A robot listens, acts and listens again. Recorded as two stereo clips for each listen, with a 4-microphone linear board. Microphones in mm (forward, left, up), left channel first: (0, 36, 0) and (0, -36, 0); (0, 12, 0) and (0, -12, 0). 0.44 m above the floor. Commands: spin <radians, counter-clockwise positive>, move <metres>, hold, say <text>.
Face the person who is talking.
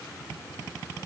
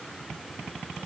hold
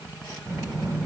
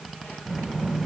spin -0.96
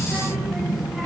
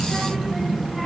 say Found it: a child speaking, straight ahead, 1 to 2 m away.